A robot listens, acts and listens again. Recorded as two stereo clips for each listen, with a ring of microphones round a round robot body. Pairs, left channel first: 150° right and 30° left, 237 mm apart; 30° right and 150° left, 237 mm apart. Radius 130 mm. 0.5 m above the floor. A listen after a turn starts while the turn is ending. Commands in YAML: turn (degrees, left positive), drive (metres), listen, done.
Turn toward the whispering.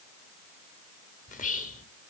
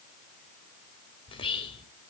turn: -95
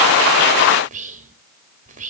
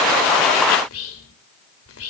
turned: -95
turn: -25
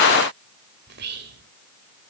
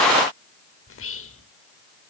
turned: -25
turn: -10
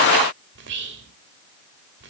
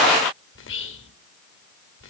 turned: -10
done: "Found it: whispering, straight ahead, 1 to 2 m away."